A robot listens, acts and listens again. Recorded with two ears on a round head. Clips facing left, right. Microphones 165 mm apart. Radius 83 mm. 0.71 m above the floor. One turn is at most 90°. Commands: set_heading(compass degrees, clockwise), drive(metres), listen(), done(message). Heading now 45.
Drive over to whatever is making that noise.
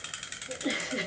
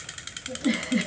set_heading(110)
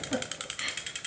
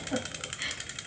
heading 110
drive(1.0)
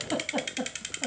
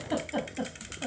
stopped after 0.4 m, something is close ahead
done("Something is in my way. I am facing the giggle but have not reached it.")